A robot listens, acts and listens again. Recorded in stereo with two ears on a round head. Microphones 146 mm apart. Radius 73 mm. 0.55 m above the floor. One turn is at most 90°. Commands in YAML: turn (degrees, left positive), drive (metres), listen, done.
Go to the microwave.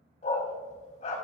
listen: true
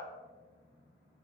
listen: true
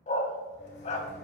turn: 70
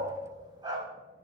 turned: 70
listen: true
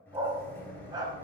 turn: 15
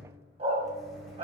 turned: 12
drive: 1.0
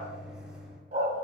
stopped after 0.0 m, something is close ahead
done: "Something is in my way. I am facing the microwave but have not reached it."